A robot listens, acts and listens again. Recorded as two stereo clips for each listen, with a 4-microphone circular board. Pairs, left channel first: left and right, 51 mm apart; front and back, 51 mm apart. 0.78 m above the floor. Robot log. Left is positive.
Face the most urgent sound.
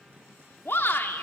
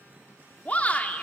note: The shout: 55° left.
cmd yaw +55
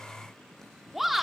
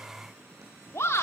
end: Facing the shout.